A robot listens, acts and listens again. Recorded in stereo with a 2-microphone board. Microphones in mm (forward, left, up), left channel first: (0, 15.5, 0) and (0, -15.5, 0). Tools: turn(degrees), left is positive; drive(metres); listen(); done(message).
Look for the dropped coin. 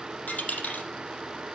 turn(degrees=60)
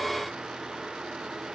listen()
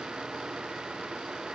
done("I heard a dropped coin, but can't make it out now. It was about straight ahead or 60° left.")